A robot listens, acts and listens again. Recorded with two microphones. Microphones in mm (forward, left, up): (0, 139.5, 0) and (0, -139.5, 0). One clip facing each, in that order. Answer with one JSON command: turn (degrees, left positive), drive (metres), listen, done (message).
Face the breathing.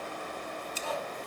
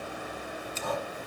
{"turn": -55}
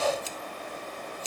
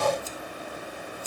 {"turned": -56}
{"turn": -60}
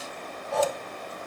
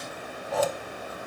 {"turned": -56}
{"done": "Facing the breathing."}